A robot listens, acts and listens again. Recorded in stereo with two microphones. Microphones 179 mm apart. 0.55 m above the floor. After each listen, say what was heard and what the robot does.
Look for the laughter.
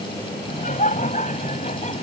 The laughter: about 40° left or 140° left. Turn 40° left.
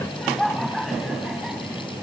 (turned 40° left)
Facing the laughter.